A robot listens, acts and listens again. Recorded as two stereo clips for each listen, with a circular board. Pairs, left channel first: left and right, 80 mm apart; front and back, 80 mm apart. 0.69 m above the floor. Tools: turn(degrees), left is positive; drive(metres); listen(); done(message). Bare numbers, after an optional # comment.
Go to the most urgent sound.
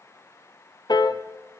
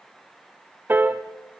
listen()
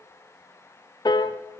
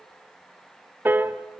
listen()
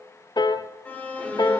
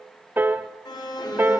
# The alarm: 20° left.
turn(20)
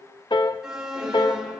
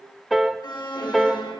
drive(1.0)
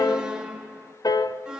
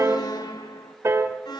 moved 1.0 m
# The alarm is now 10° right.
turn(-10)
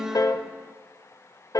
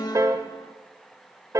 drive(1.0)
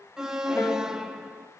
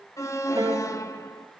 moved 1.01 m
# The alarm is now 10° right.
turn(-10)
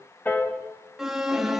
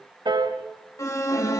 drive(1.0)
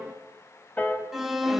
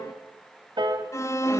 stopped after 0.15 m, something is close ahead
done("I am next to the alarm.")